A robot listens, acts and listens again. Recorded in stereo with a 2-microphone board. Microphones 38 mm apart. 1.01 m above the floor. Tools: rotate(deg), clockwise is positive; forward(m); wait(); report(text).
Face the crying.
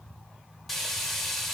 wait()
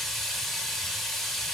wait()
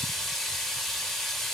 report("I can't make out crying to turn to.")